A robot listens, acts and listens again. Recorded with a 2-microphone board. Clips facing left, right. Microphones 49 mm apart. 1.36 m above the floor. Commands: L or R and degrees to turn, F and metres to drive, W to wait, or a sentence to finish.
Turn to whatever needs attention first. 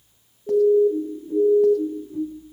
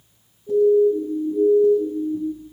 L50
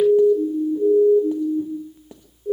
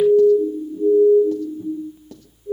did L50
L80
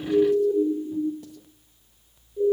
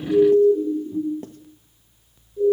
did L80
L20
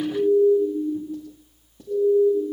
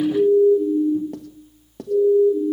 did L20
Facing the siren.